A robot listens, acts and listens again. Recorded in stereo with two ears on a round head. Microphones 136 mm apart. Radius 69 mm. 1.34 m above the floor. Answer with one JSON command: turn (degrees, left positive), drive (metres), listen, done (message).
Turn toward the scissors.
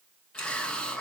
{"turn": 65}
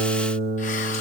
{"listen": true}
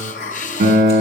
{"listen": true}
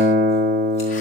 {"done": "I heard scissors, but can't make it out now. It was about straight ahead or 50° left."}